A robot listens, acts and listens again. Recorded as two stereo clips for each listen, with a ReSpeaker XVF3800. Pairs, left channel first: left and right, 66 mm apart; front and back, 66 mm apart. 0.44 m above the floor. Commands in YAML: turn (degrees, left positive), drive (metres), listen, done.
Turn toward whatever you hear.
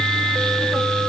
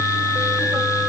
listen: true
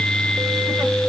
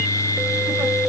listen: true
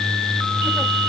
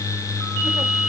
done: "I can't make out anything to turn to."